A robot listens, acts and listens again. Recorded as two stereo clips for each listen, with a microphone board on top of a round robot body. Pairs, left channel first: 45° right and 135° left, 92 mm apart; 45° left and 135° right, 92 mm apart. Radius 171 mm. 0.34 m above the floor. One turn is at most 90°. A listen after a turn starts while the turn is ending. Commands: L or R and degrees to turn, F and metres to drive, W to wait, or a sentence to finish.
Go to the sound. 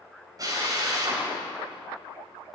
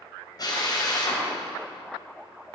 L90
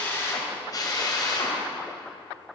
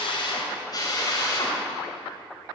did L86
F1.0
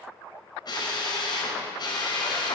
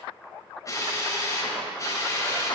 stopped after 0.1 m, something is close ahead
Blocked. The drill is further on, straight ahead.